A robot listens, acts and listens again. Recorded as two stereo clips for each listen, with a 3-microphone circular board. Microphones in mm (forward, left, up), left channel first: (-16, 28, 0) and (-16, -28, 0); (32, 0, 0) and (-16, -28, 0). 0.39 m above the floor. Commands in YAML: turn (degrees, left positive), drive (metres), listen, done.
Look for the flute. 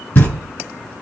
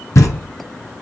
listen: true
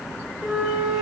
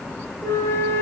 done: "Facing the flute."